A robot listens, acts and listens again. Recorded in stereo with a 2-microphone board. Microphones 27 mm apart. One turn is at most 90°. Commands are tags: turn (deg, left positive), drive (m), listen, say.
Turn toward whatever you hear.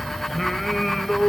<turn deg="30"/>
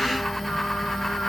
<listen/>
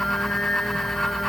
<listen/>
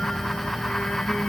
<say>I heard singing, but can't make it out now. It was about 30° right or 150° left.</say>